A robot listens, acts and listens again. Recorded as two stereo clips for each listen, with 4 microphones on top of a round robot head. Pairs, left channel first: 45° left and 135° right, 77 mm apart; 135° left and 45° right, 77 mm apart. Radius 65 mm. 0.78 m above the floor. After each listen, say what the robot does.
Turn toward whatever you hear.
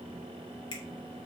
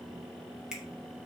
Turn 30° left.
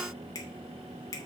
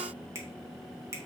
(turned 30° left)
Facing the finger snap.